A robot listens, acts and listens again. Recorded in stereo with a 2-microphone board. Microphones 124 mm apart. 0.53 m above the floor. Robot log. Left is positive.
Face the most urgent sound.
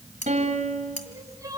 note: The crying: about 25° right or 155° right.
cmd yaw -25
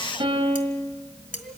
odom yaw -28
cmd idle
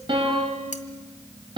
cmd idle
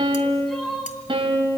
end: Facing the crying, over 4 m away.